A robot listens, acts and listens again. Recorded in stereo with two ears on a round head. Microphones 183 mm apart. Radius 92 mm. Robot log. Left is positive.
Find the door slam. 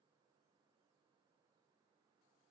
cmd idle
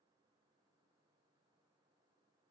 cmd idle
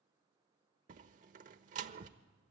note: The door slam: about 40° right or 140° right.
cmd yaw -40
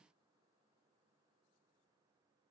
cmd idle
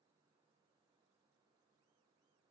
end: I heard a door slam, but can't make it out now. It was about straight ahead or 100° right.